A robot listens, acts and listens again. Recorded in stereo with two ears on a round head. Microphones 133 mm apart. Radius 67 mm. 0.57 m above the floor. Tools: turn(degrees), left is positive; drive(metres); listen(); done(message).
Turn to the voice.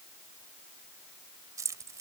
listen()
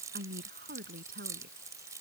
turn(degrees=-70)
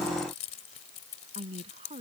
turn(degrees=-40)
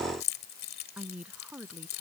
turn(degrees=-10)
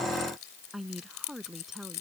done("Found it: a woman speaking, straight ahead.")